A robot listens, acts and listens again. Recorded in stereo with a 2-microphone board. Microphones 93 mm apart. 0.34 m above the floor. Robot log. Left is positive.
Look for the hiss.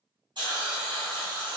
note: The hiss: about 60° right or 120° right.
cmd yaw -60
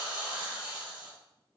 note: So it is at 20° right.
cmd yaw -20
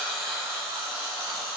end: Found it: a hiss, straight ahead, 2 to 4 m away.